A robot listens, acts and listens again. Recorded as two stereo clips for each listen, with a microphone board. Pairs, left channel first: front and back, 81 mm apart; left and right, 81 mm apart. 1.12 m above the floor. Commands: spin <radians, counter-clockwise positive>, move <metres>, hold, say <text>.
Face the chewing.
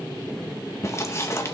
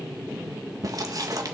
spin -0.96
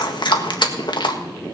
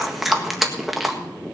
say Facing the chewing.